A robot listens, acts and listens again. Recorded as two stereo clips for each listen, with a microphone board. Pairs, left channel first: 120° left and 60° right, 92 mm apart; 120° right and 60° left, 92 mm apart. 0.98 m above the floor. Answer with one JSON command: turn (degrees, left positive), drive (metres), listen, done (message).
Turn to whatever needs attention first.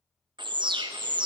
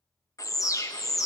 {"turn": -75}
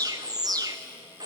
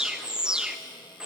{"turn": -20}
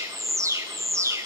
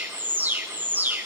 {"done": "Facing the alarm, under 1 m away."}